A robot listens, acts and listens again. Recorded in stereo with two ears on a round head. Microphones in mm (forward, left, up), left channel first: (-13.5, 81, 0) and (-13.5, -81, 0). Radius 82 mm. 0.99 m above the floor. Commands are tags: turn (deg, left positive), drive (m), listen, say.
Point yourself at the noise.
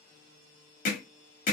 <turn deg="45"/>
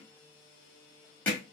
<turn deg="10"/>
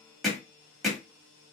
<say>Facing the hammering.</say>